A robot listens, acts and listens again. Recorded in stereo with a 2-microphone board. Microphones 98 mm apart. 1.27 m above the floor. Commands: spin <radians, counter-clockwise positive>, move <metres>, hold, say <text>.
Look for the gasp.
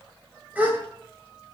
spin -0.26
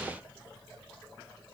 hold
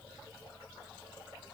say I heard a gasp, but can't make it out now. It was about straight ahead or 150° right.